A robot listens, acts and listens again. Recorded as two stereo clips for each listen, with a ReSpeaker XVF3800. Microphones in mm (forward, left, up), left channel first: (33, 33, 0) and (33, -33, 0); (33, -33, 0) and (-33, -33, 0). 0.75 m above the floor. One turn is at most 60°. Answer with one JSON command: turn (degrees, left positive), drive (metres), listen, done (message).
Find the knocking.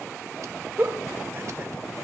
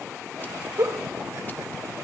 {"listen": true}
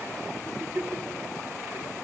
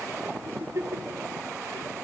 {"listen": true}
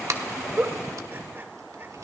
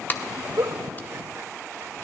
{"done": "I can't make out knocking to turn to."}